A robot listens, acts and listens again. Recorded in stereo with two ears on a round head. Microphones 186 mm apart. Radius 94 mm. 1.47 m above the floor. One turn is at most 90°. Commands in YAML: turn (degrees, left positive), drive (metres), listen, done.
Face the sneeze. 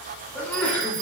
turn: 30
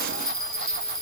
listen: true
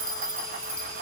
done: "I heard a sneeze, but can't make it out now. It was about 20° right or 140° left."